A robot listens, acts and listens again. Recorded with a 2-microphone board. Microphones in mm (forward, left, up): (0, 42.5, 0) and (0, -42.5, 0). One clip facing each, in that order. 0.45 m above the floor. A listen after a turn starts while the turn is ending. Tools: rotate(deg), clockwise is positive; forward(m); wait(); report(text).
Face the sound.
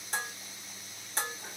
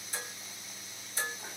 rotate(-75)
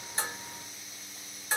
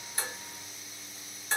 rotate(-10)
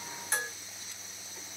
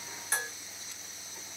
report("Found it: dishes clattering, straight ahead, 2 to 4 m away.")